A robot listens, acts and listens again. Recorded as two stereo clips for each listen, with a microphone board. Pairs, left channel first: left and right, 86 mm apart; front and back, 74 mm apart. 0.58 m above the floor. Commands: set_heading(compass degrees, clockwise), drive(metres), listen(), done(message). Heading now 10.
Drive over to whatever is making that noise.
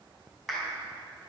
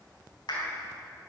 drive(1.0)
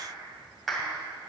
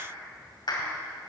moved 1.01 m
drive(1.0)
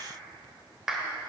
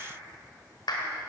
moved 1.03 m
drive(1.0)
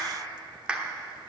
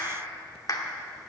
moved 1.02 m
set_heading(25)
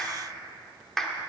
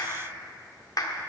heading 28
drive(1.0)
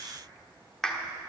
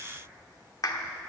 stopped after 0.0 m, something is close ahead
done("I am next to the clap.")